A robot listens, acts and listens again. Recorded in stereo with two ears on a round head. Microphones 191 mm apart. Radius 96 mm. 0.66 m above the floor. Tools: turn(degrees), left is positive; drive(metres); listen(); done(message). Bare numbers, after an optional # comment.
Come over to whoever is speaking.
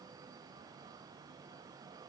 listen()
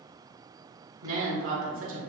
# The woman speaking: about 65° right or 115° right.
turn(-65)
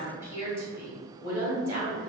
# So it is at 15° right.
turn(-15)
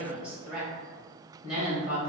drive(1.0)
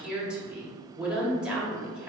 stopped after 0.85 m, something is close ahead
done("Arrived at the woman speaking, straight ahead.")